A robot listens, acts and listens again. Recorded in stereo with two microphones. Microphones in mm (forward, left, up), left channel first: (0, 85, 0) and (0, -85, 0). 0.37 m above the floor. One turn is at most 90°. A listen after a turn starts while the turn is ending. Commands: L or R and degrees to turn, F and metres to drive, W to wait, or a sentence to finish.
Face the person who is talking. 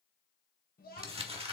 L55
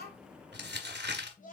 L55
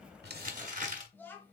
L15
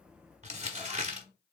W
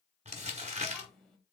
Facing the child speaking.